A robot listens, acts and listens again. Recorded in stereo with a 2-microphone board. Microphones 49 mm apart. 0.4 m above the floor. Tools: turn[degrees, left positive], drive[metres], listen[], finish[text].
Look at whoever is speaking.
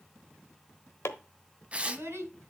Thought: The child speaking: about 55° right or 125° right.
Action: turn[-55]
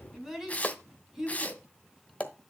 Action: finish[Facing the child speaking.]